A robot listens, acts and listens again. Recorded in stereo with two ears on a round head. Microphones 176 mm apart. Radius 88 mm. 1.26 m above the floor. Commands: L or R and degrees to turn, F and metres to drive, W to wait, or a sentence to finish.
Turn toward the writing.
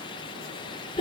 W
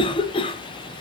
W
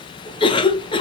I can't make out writing, only a cough.